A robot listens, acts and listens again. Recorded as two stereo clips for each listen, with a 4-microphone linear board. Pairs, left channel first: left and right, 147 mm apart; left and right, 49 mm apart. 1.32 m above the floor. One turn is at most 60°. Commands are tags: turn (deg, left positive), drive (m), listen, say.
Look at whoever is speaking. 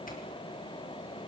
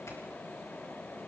<listen/>
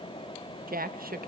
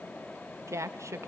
<turn deg="-60"/>
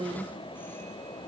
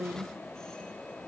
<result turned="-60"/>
<turn deg="-35"/>
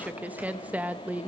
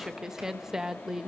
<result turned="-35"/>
<turn deg="-10"/>
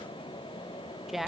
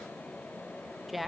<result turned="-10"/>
<say>Found it: a woman speaking, straight ahead, 1 to 2 m away.</say>